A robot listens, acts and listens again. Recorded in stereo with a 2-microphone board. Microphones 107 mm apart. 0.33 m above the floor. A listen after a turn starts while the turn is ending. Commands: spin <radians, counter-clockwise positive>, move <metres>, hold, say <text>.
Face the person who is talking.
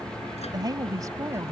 spin -0.44
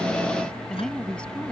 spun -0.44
spin 0.17
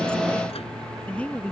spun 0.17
spin 0.26
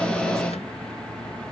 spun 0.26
hold
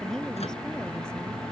say Found it: a woman speaking, straight ahead.